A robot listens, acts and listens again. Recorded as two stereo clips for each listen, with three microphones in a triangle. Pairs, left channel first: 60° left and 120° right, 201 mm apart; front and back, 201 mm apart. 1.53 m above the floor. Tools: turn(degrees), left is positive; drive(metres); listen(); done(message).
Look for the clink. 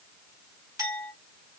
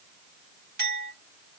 turn(degrees=170)
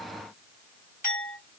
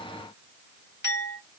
turn(degrees=20)
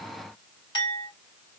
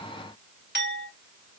done("Facing the clink, 1 to 2 m away.")